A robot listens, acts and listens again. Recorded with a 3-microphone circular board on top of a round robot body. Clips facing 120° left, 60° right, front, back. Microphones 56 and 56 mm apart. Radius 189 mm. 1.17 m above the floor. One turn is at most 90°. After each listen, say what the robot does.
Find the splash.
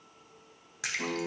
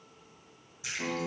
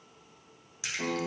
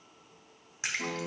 Turn 90° left.
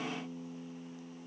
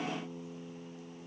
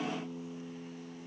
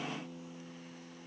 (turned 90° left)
Turn 35° left.
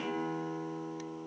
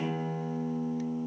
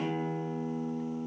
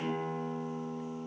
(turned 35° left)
Facing where the splash came from. I can't hear it now.